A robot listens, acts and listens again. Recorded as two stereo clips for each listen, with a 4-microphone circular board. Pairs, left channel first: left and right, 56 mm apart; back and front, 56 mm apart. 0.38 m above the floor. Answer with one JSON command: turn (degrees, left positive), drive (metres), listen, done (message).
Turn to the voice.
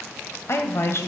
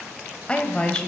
{"turn": 105}
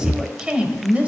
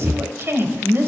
{"turn": -30}
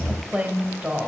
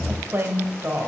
{"turn": -40}
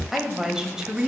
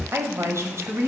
{"turn": -15}
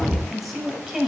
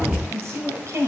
{"turn": -10}
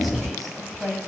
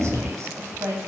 {"done": "Facing the woman speaking, 1 to 2 m away."}